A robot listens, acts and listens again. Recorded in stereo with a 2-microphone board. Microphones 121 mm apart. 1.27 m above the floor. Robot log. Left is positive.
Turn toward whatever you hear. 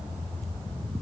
cmd idle
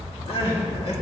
note: The crying: about 55° left or 125° left.
cmd yaw +55
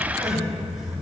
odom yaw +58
cmd idle
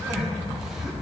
cmd idle
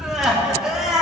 end: Found it: crying, straight ahead.